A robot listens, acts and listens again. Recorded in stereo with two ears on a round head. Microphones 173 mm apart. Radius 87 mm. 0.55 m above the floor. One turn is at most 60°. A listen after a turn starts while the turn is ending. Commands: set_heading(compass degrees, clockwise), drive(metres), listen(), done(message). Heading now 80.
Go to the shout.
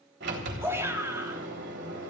set_heading(95)
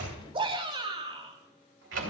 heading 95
set_heading(155)
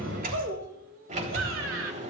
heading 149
set_heading(209)
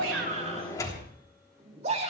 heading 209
set_heading(244)
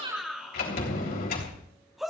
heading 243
drive(1.0)
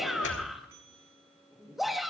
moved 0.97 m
drive(1.0)
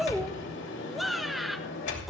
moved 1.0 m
drive(1.0)
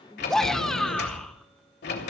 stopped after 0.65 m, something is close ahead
done("I am next to the shout.")